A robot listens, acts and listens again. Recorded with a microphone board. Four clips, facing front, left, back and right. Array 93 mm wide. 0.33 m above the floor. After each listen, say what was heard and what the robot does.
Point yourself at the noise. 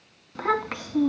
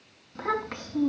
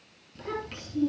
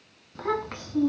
Found it: a child speaking, straight ahead, 2 to 4 m away.